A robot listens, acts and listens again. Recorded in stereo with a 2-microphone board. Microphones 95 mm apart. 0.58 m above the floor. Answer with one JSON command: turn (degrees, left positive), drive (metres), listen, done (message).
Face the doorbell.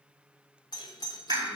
{"turn": 45}
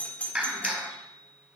{"turn": 15}
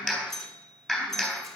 {"done": "Found it: a doorbell, straight ahead, 1 to 2 m away."}